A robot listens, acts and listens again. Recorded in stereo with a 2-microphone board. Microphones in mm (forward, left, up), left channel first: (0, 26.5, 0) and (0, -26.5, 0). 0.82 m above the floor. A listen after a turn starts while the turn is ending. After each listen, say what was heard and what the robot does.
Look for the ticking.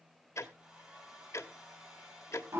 The ticking: about 60° left or 120° left. Turn 60° left.
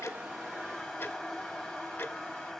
So it is at 55° left. Turn 55° left.
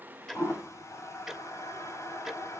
Facing the ticking, 1 to 2 m away.